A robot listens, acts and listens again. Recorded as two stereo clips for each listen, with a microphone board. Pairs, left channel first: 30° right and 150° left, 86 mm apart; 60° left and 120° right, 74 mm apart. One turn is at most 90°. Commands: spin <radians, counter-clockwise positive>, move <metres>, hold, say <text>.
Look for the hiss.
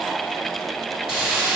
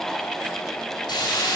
spin 1.22
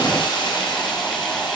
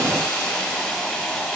spin -0.17
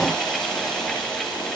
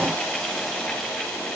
hold
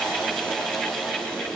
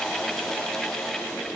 hold
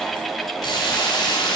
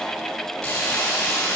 say Found it: a hiss, straight ahead, 2 to 4 m away.